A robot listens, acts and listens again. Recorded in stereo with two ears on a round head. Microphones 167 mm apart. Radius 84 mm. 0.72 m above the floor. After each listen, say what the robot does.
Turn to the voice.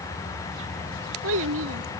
Turn 90° right.
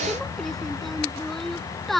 Found it: a child speaking, straight ahead.